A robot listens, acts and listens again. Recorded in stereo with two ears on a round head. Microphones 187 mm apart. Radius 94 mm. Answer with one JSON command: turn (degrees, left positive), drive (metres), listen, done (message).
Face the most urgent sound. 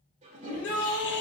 {"turn": 60}
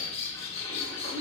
{"done": "Facing the shout."}